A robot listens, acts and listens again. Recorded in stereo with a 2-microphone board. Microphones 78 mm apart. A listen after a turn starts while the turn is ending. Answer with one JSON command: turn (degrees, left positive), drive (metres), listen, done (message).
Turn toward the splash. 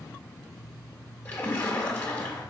{"turn": 20}
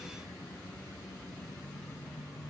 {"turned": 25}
{"listen": true}
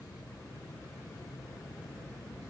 {"done": "I heard a splash, but can't make it out now. It was about 5° right or 135° left."}